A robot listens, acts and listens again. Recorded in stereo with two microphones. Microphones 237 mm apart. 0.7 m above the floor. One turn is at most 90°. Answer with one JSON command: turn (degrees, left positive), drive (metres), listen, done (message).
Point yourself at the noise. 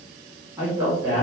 {"turn": -30}
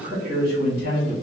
{"turn": -90}
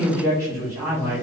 {"turn": -15}
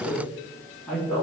{"done": "Found it: a man speaking, straight ahead."}